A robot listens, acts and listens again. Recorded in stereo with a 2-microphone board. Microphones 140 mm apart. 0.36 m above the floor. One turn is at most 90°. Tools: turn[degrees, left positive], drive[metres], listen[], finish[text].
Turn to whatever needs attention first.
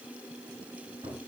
Action: listen[]
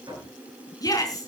Thought: The shout: about 25° left or 155° left.
Action: turn[25]
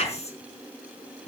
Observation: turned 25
Thought: So it is at 130° left.
Action: turn[90]
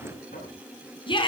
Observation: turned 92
Thought: The shout is now 40° left.
Action: turn[40]
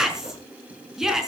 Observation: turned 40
Action: finish[Found it: a shout, straight ahead.]